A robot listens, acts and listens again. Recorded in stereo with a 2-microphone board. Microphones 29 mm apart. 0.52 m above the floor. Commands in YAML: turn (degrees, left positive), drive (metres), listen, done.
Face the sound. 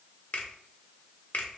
turn: 50
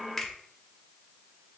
turn: 15
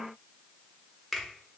done: "Found it: a finger snap, straight ahead."